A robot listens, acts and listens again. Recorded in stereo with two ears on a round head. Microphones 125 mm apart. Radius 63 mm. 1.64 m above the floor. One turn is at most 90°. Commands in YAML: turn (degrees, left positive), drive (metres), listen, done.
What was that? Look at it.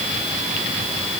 listen: true
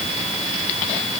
listen: true
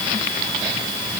done: "I can't make out anything to turn to."